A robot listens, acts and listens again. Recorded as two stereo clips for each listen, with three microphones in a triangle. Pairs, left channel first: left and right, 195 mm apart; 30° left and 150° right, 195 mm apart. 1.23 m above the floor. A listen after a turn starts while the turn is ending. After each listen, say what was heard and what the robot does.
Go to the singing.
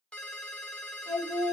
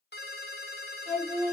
The singing: 25° right. Turn 25° right.
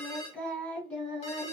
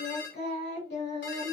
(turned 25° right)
Drive 1.0 m forward.
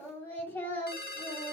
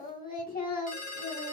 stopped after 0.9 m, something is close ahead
The singing is now 15° left. Turn 15° left.
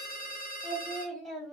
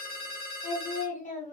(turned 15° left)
I am next to the singing.